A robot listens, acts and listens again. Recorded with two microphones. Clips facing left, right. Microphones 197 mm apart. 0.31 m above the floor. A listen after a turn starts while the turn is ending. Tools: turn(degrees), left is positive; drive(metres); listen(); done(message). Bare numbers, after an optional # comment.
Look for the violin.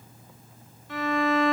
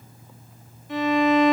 # The violin: about 20° right or 160° right.
turn(-20)
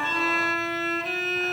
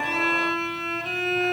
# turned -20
done("Found it: a violin, straight ahead, 1 to 2 m away.")